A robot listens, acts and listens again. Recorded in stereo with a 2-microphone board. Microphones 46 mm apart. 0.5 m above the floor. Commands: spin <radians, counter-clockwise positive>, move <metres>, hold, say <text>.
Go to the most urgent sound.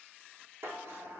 hold
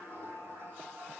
hold
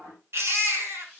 spin -1.13
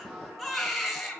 move 1.0
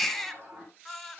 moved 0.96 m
move 1.0
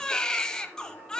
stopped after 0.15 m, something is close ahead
spin 0.26
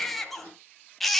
say I am next to the baby crying.